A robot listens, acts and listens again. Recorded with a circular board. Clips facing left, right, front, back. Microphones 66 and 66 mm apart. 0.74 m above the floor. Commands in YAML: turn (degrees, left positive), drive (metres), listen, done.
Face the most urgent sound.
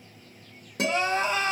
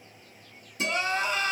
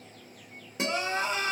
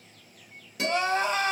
turn: 155
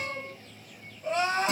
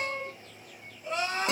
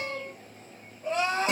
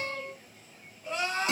turn: 35
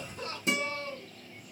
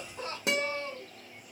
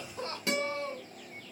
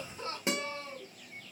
turn: -25
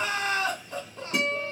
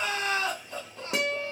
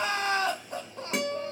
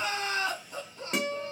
done: "Found it: crying, straight ahead."